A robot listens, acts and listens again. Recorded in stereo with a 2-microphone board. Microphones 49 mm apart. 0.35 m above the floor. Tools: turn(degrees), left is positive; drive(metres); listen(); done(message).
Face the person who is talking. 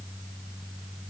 listen()
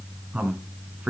turn(degrees=-35)
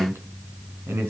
turn(degrees=-110)
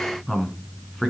turn(degrees=10)
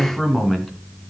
done("Facing the man speaking.")